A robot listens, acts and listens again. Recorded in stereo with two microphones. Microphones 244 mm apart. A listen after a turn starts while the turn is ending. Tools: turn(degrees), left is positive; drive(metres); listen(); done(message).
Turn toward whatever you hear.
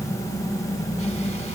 listen()
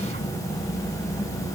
listen()
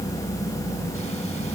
done("I can't make out anything.")